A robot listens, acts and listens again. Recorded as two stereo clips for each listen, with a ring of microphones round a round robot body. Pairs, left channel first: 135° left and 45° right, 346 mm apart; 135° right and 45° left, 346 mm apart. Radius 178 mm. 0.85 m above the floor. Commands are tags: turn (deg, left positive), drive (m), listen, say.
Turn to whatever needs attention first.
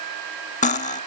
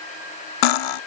<listen/>
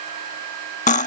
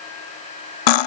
<listen/>
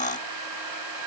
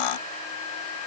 <say>I can't make out anything urgent, only cutlery clinking.</say>